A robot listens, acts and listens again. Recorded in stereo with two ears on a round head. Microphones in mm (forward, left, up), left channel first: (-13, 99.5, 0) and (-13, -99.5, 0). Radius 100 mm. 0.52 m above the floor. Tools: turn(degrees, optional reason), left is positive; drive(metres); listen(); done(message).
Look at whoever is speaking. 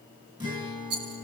listen()
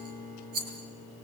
listen()
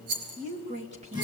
turn(degrees=-30, reason="The woman speaking: about 30° right or 150° right.")
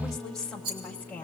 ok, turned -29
turn(degrees=10, reason="So it is at 10° left.")
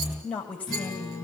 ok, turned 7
turn(degrees=10, reason="The woman speaking is now 10° left.")
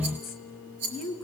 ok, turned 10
done("Found it: a woman speaking, straight ahead, 2 to 4 m away.")